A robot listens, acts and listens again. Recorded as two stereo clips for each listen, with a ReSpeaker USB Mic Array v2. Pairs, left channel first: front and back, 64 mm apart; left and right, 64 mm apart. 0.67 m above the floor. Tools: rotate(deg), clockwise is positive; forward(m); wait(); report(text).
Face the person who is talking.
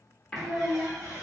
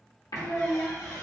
rotate(-150)
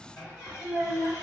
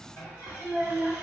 report("Found it: a child speaking, straight ahead, 1 to 2 m away.")